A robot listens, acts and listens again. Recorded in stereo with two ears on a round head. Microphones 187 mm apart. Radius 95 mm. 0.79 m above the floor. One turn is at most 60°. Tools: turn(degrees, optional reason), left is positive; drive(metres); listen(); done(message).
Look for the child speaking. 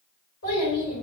turn(degrees=60, reason="The child speaking: about 70° left or 110° left.")
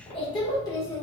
turn(degrees=10, reason="So it is at 10° left.")
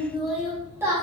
turn(degrees=-15, reason="The child speaking is now 15° right.")
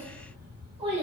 turn(degrees=-30, reason="The child speaking is now 30° right.")
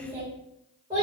turn(degrees=-20, reason="The child speaking is now 20° right.")
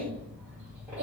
turn(degrees=-10, reason="The child speaking is now 10° right.")
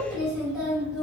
done("Found it: a child speaking, straight ahead, 1 to 2 m away.")